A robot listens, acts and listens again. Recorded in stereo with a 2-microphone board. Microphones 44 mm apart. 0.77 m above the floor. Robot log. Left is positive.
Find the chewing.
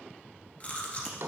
note: The chewing: about 35° left or 145° left.
cmd yaw +35
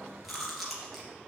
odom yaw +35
end: Facing the chewing.